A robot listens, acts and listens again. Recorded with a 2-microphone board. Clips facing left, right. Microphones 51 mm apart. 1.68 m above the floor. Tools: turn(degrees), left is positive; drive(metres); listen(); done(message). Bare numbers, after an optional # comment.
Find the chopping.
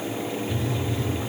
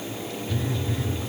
listen()
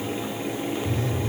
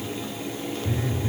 listen()
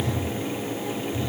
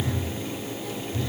done("I can't make out chopping, only a phone buzzing.")